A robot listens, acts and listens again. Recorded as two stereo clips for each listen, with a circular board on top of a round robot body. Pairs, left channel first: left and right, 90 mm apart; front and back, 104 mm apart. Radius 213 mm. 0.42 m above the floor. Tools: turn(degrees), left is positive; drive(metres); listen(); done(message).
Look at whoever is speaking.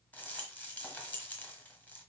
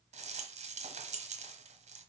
listen()
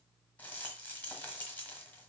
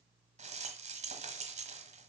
listen()
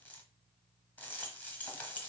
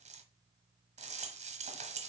done("I can't make out anyone speaking to turn to.")